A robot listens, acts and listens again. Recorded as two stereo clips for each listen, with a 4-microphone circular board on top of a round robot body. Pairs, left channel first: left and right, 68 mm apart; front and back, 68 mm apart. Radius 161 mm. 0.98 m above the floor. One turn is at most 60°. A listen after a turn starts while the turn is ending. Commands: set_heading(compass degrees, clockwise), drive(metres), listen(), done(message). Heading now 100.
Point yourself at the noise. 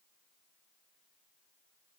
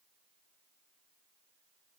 listen()
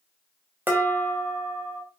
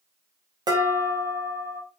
set_heading(160)
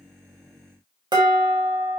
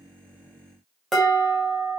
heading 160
set_heading(220)
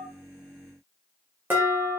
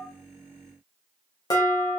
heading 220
set_heading(250)
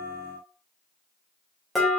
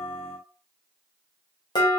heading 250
done("Facing the dishes clattering.")